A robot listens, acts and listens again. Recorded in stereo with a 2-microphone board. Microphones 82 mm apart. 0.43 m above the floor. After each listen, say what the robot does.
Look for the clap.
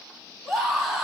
Keep listening.
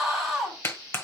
Turn 30° left.
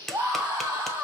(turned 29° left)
Facing the clap.